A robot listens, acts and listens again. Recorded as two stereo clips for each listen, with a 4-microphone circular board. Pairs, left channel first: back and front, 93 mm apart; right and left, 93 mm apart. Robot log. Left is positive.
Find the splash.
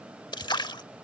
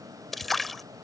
note: The splash: 175° right.
cmd yaw -175
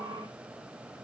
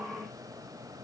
end: I heard a splash from this way, but can't make it out now.